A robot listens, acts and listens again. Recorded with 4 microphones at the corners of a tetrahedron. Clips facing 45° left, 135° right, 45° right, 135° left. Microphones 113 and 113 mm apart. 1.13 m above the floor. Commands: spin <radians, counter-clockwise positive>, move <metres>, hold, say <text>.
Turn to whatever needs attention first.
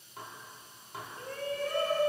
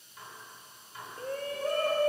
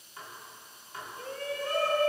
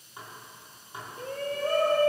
spin 3.14
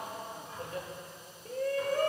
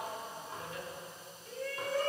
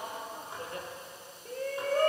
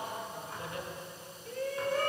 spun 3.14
say Found it: a shout, straight ahead.